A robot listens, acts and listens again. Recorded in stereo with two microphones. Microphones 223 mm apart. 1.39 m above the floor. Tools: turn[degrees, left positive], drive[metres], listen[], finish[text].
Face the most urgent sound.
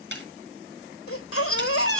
Thought: The baby crying: about 75° left or 105° left.
Action: turn[75]
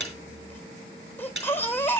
Thought: So it is at 10° left.
Action: turn[10]
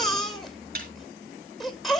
Action: finish[Found it: a baby crying, straight ahead.]